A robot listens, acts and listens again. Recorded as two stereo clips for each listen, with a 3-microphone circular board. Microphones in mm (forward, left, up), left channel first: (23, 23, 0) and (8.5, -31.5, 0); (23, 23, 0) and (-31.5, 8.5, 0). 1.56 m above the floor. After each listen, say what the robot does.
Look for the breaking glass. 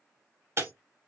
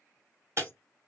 Turn 135° right.
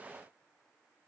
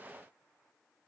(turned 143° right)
Turn 10° left.
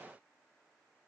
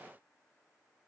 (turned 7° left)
I heard breaking glass from this way, but can't make it out now.